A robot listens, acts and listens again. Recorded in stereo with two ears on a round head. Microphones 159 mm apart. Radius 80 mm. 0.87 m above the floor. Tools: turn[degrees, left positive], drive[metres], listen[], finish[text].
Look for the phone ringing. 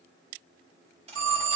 Action: turn[-90]
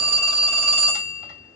Action: finish[Facing the phone ringing.]